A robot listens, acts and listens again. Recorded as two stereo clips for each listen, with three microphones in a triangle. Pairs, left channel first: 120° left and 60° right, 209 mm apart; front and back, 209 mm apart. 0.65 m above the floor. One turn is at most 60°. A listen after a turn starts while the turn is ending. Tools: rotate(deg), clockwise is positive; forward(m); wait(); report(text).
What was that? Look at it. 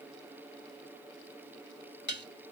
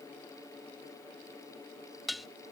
rotate(-60)
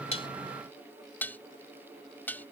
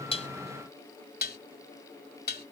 rotate(-40)
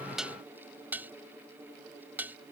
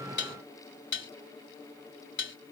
rotate(-20)
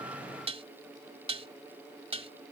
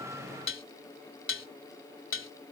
report("Facing the dishes clattering.")